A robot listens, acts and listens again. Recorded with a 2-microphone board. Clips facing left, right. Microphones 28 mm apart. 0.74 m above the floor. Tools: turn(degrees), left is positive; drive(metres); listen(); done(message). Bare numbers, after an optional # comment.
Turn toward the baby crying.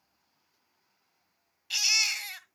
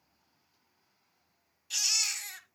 # The baby crying: about 45° left or 135° left.
turn(45)
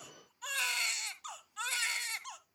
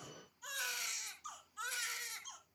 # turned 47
# So it is at 90° left.
turn(90)
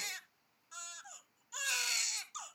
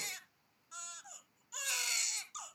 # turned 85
done("Facing the baby crying.")